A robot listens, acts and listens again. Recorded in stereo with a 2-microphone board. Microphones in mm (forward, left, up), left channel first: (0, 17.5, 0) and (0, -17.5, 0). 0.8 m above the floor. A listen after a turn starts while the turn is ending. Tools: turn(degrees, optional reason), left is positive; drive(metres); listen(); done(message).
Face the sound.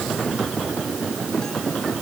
listen()
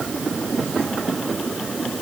listen()
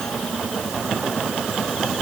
done("I can't make out anything.")